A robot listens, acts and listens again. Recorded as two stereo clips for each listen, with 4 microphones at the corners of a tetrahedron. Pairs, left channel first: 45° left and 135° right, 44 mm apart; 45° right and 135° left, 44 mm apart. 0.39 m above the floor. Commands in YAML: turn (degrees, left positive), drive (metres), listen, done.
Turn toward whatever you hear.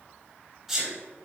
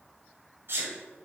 turn: 135
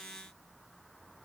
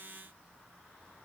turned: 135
done: "I heard a sneeze from this way, but can't make it out now."